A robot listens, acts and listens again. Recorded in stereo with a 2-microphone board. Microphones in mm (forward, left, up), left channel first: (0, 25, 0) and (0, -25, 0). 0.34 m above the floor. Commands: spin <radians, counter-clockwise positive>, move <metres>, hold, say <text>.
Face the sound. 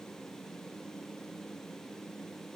hold
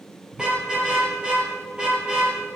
spin -0.35
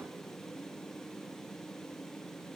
hold
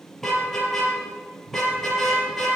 say Facing the car horn, 2 to 4 m away.